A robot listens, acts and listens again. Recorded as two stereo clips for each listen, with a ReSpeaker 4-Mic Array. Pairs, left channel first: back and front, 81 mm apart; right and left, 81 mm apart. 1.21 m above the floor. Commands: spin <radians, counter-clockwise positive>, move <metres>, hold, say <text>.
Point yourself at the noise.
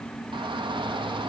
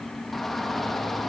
say Facing the shout.